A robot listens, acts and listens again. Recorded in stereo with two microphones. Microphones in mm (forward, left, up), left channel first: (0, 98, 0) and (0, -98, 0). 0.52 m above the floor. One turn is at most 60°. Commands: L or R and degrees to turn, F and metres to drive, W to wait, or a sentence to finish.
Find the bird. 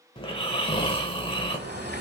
R55
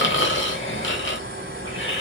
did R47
R60
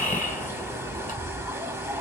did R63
R15
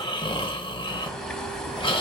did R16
Facing the bird.